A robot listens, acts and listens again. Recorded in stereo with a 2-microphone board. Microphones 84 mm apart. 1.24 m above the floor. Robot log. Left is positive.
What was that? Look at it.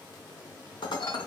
note: The dishes clattering: about 60° left or 120° left.
cmd yaw +60
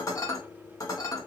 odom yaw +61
note: So it is at 45° left.
cmd yaw +45
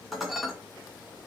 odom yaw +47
end: Found it: dishes clattering, straight ahead, under 1 m away.